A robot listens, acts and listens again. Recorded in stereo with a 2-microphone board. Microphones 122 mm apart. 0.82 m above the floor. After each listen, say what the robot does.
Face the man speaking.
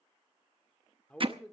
Turn 30° left.
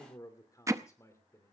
Turn 155° left.
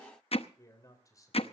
Turn 30° left.
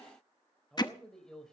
Found it: a man speaking, straight ahead.